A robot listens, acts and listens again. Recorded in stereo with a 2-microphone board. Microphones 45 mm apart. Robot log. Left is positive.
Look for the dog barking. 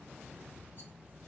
cmd idle
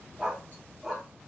cmd yaw +30
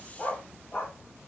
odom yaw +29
note: So it is at 135° left.
cmd yaw +135
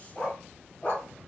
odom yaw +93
note: The dog barking is now 20° left.
cmd yaw +20
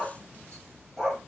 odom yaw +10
end: Facing the dog barking.